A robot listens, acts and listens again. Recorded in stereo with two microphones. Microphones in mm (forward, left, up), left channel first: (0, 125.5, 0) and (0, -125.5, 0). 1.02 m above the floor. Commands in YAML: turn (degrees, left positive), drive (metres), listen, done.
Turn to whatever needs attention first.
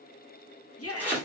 turn: 65
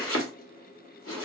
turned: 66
listen: true
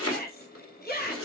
turn: 40
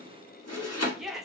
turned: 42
done: "Facing the shout."